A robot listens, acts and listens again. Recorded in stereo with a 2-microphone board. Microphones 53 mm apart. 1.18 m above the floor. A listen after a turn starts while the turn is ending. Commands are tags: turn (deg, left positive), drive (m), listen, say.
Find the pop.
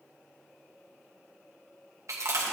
<listen/>
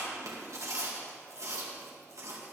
<listen/>
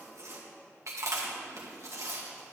<say>I can't make out a pop, only chewing.</say>